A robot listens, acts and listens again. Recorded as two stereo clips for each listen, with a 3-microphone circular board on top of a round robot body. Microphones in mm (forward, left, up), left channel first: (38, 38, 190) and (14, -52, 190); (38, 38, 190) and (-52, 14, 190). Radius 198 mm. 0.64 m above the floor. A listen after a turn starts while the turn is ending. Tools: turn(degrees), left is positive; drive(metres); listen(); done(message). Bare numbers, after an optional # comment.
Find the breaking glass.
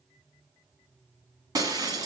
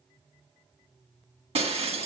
# The breaking glass: 160° right.
turn(-160)
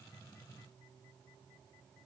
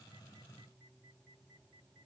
done("I heard breaking glass from this way, but can't make it out now.")